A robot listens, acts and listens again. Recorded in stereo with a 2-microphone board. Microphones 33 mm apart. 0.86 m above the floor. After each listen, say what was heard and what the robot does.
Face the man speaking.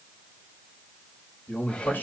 Turn 90° left.
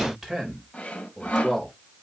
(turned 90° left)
Facing the man speaking.